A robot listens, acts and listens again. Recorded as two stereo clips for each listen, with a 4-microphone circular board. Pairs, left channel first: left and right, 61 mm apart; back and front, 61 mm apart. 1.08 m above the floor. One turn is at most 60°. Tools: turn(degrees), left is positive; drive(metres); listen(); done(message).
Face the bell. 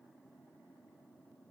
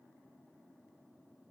listen()
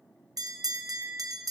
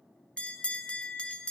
turn(degrees=-60)
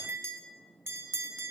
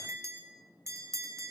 turn(degrees=-40)
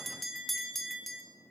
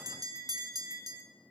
done("Found it: a bell, straight ahead.")